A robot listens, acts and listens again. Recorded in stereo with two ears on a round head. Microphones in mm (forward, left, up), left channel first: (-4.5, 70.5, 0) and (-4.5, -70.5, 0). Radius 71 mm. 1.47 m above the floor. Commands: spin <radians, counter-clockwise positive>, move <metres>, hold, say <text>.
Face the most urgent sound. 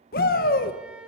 spin 1.05
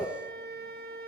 spin 0.17
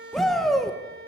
say Facing the shout.